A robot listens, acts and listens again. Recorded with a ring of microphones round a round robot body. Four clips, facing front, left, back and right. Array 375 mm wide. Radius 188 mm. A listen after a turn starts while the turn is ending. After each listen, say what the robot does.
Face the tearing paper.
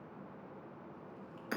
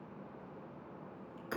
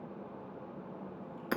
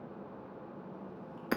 Keep listening.
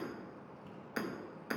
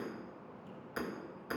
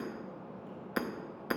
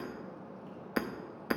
Keep listening.
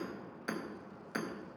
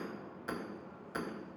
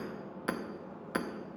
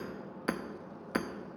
I can't make out tearing paper to turn to.